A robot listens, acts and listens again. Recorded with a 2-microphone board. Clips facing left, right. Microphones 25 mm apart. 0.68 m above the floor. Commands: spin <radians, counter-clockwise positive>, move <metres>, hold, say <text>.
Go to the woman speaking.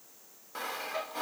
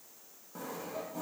hold
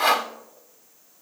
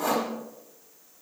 hold
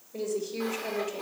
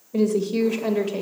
spin -1.31
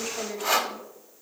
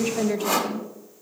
spin -0.35
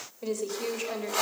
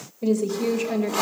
move 1.0
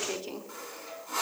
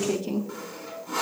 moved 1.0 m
move 1.0
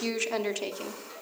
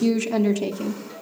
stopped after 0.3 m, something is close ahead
say Arrived at the woman speaking, straight ahead.